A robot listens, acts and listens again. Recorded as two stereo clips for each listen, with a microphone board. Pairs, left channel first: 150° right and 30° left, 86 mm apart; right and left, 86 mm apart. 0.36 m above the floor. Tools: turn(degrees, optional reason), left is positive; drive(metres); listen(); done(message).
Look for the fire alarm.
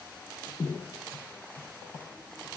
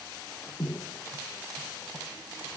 listen()
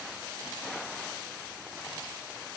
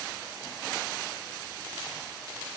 listen()
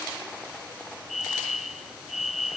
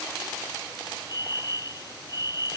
turn(degrees=-60, reason="The fire alarm: 60° right.")
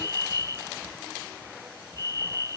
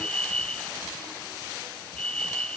turn(degrees=-15, reason="The fire alarm is now 15° right.")
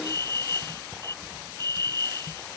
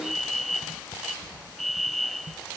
done("Found it: a fire alarm, straight ahead.")